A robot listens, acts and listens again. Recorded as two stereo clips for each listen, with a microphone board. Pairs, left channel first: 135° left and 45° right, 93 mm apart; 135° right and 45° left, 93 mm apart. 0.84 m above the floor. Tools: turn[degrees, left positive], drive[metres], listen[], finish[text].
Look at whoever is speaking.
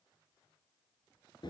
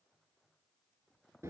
Action: listen[]
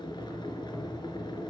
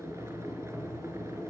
Action: listen[]
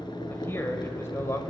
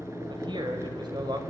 Thought: The man speaking: 75° left.
Action: turn[75]
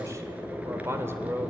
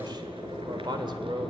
Thought: The man speaking is now 20° left.
Action: turn[20]
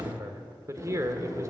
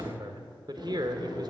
Thought: The man speaking is now 10° left.
Action: turn[10]
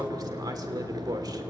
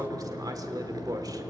Action: finish[Found it: a man speaking, straight ahead, 2 to 4 m away.]